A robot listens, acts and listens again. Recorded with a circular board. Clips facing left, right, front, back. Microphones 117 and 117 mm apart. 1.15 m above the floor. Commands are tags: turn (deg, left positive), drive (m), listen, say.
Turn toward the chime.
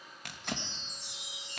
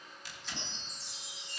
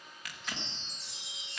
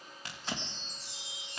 <turn deg="20"/>
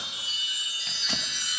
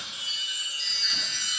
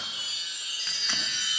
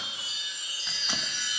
<say>Facing the chime, 2 to 4 m away.</say>